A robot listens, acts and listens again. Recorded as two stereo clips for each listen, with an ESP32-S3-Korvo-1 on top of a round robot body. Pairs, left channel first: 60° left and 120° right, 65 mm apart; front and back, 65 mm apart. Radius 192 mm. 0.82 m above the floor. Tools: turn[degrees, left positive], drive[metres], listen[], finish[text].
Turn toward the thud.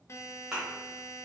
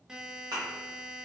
Thought: The thud: 160° left.
Action: turn[160]
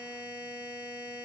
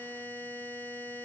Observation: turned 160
Action: finish[Facing where the thud came from. I can't hear it now.]